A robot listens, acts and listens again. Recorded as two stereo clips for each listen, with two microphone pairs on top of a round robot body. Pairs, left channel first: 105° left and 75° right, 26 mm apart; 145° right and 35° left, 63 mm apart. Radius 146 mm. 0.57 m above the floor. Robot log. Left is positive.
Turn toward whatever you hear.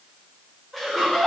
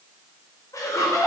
note: The laughter: 165° right.
cmd yaw -165
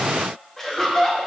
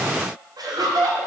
note: The laughter is now 25° left.
cmd yaw +25
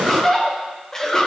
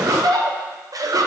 note: The laughter is now 30° left.
cmd yaw +30
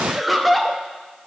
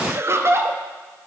end: Facing the laughter.